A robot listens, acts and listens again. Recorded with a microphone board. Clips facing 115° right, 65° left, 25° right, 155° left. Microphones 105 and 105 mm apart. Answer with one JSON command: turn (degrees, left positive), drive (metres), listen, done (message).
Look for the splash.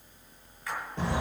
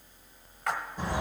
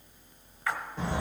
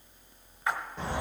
{"turn": 90}
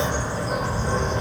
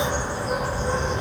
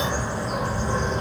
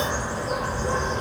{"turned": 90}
{"done": "I heard a splash from this way, but can't make it out now."}